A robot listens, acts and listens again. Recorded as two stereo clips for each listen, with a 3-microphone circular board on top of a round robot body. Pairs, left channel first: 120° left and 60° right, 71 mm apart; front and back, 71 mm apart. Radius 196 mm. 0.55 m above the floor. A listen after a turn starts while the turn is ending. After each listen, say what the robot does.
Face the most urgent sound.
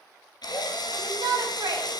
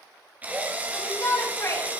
Turn 45° right.
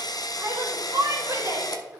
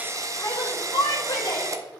Turn 15° right.
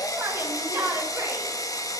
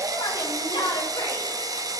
Found it: a shout, straight ahead, 2 to 4 m away.